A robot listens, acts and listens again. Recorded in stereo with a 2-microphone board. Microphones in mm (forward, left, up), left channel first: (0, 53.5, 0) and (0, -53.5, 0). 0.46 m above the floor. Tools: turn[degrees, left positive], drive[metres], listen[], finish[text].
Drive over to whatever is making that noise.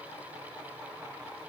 Action: listen[]
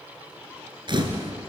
Thought: The camera shutter: about 45° right or 135° right.
Action: turn[-45]
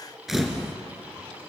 Action: drive[1.0]
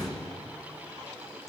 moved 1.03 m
Action: drive[1.0]
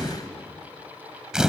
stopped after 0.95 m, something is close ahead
Action: finish[I am next to the camera shutter.]